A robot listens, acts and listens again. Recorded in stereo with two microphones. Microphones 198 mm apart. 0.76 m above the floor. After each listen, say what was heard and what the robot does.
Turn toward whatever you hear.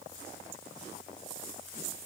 Keep listening.
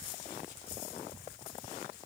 Keep listening.
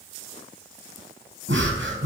Turn 90° right.
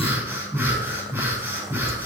So it is at 10° right. Turn 10° right.
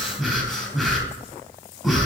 Found it: breathing, straight ahead.